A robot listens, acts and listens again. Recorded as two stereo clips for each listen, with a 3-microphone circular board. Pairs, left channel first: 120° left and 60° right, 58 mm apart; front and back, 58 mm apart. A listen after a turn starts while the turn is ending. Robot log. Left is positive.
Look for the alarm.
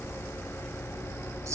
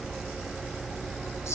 cmd idle
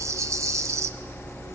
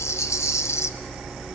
cmd idle
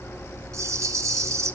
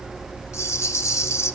end: I can't make out an alarm to turn to.